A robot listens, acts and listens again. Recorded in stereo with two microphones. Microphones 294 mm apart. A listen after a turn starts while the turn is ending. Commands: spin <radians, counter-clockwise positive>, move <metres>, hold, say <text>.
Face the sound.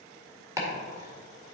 spin -0.52
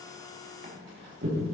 spin -2.44
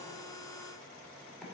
hold
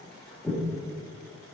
say Found it: chopping, straight ahead.